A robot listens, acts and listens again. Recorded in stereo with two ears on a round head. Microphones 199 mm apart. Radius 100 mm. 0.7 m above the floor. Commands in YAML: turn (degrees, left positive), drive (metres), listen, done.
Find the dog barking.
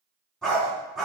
turn: 30
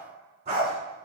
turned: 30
turn: -35
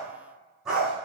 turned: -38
done: "Found it: a dog barking, straight ahead, 2 to 4 m away."